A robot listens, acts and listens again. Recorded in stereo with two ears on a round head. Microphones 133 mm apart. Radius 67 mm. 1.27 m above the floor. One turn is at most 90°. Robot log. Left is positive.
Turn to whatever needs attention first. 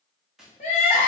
note: The crying: about 50° left or 130° left.
cmd yaw +50
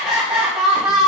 end: Found it: crying, straight ahead.